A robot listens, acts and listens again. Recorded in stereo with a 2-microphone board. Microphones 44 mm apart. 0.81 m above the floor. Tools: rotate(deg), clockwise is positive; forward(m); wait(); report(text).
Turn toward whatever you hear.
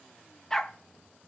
rotate(-30)
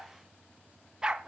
rotate(15)
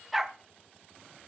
report("Found it: a dog barking, straight ahead.")